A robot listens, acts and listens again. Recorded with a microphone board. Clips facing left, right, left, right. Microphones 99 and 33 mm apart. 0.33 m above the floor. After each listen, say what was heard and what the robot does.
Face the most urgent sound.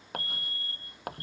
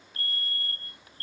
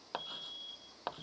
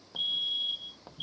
The fire alarm: about 65° right or 115° right. Turn 65° right.
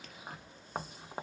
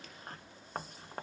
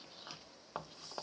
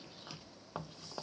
Keep listening.
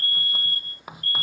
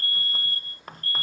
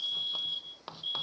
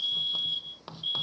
So it is at 25° right. Turn 25° right.
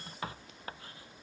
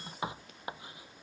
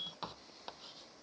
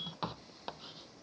Keep listening.
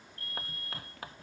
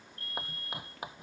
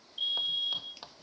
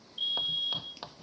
Facing the fire alarm.